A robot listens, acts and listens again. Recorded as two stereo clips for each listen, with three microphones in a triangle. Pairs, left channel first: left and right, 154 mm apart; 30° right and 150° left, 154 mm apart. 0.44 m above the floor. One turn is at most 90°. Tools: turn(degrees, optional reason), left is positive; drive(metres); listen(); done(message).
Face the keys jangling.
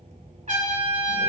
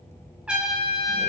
listen()
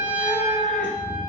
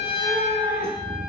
listen()
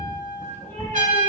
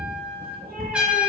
done("I can't make out keys jangling, only a cat meowing and a trumpet.")